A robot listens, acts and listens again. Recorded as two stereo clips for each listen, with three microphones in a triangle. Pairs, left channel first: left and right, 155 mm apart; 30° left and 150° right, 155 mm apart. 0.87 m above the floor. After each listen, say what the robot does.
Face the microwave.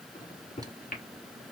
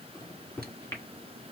Turn 100° left.
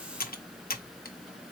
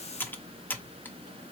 Keep listening.
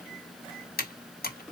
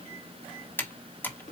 Keep listening.
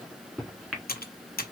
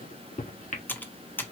Facing the microwave, 1 to 2 m away.